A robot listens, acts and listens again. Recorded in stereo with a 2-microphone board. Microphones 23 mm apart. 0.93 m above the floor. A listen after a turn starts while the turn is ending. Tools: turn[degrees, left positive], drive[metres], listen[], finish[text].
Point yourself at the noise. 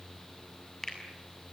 Thought: The finger snap: about 20° left or 160° left.
Action: turn[20]
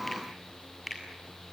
Action: finish[Facing the finger snap.]